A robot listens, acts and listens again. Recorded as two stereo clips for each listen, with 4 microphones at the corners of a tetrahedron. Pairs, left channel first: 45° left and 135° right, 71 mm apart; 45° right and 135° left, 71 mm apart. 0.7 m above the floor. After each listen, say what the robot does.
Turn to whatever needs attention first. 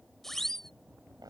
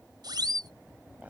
Turn 130° left.
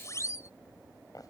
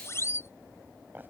Found it: a siren, straight ahead.